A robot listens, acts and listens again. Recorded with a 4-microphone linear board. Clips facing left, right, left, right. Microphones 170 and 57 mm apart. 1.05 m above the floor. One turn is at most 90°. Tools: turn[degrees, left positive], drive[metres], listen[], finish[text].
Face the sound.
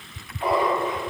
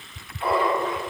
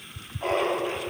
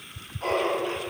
Thought: The laughter: about 20° left or 160° left.
Action: turn[20]
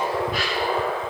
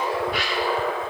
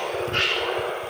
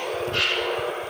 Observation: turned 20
Thought: So it is at 135° left.
Action: turn[90]
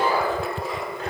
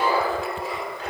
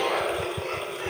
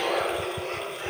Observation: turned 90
Thought: The laughter is now 45° left.
Action: turn[45]
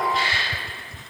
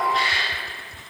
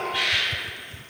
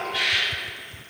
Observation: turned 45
Action: finish[Facing the laughter.]